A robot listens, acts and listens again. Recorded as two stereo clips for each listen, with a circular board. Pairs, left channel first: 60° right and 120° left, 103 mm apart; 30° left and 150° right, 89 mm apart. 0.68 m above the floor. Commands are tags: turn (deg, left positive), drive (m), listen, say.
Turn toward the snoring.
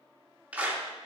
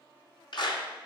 <listen/>
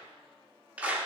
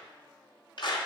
<listen/>
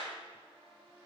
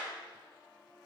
<say>I can't make out snoring to turn to.</say>